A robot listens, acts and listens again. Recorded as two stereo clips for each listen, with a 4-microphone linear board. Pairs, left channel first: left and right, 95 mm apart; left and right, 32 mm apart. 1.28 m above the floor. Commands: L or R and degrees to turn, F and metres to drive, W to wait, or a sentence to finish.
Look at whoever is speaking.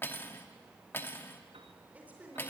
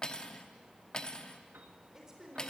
R15
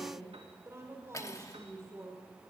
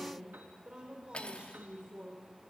R150
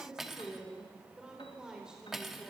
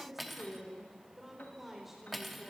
Found it: a woman speaking, straight ahead.